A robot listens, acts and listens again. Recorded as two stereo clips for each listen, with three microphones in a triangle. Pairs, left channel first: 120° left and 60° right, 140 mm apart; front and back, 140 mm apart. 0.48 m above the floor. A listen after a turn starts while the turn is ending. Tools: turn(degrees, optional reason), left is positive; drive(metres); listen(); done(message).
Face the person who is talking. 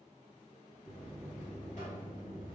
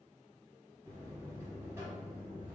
listen()
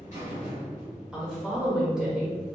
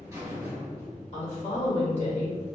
turn(degrees=25, reason="The woman speaking: 25° left.")
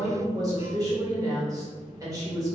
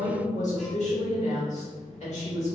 done("Facing the woman speaking, 1 to 2 m away.")